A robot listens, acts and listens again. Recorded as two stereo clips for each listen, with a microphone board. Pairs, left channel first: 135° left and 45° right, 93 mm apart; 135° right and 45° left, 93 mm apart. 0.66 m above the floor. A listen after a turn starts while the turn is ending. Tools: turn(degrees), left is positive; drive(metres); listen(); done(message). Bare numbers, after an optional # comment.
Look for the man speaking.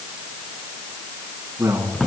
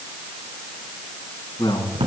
# The man speaking: 105° right.
turn(-105)
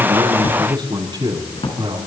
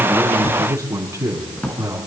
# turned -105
# The man speaking is now 15° right.
turn(-15)
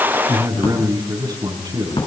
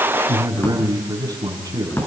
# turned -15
done("Found it: a man speaking, straight ahead, over 4 m away.")